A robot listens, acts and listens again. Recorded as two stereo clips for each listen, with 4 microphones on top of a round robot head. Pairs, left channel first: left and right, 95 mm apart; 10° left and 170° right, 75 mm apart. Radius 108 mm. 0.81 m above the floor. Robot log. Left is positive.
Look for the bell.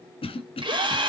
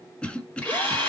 cmd idle
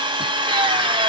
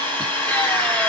cmd idle
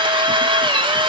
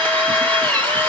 end: I can't make out a bell to turn to.